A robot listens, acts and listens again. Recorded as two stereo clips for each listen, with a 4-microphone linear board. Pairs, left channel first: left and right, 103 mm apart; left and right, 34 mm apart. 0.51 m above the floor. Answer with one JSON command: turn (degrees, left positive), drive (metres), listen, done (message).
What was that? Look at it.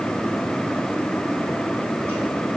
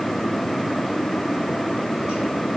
{"listen": true}
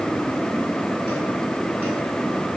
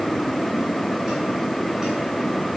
{"listen": true}
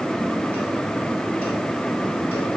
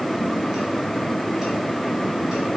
{"done": "I can't make out anything to turn to."}